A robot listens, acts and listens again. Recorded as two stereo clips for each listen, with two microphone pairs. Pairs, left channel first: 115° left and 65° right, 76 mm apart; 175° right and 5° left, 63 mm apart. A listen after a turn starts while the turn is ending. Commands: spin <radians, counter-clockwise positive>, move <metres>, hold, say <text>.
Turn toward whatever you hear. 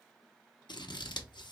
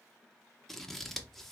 spin 1.75
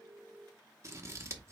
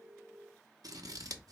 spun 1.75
spin -0.17
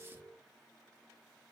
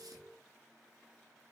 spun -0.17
hold
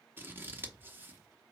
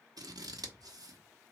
say Facing the scissors, under 1 m away.